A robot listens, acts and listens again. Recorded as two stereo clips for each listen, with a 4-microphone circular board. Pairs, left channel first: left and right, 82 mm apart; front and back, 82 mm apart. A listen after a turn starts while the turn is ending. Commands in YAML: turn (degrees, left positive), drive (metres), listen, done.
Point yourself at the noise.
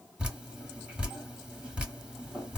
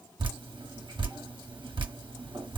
turn: -165
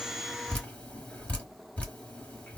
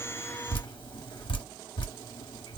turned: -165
turn: 20
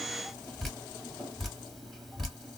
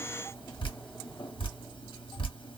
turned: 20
done: "Facing the dripping, 1 to 2 m away."